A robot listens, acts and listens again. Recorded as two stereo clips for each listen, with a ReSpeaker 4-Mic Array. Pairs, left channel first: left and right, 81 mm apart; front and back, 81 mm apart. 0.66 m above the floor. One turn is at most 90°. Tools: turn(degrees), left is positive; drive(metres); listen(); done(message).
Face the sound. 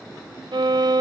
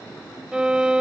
turn(degrees=-90)
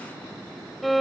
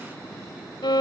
done("Facing the violin.")